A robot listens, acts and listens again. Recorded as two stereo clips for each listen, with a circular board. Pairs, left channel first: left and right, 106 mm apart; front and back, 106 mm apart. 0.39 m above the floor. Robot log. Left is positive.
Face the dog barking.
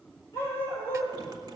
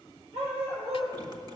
note: The dog barking: 155° left.
cmd yaw +155
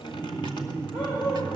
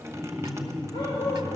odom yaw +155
note: The dog barking is now 45° left.
cmd yaw +45
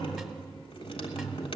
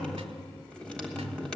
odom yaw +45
cmd idle
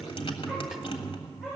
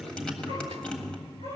end: Facing the dog barking, over 4 m away.